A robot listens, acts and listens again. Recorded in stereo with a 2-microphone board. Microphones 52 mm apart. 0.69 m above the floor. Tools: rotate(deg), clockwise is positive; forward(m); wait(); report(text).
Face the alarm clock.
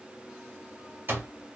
rotate(40)
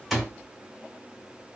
report("Facing the alarm clock, 1 to 2 m away.")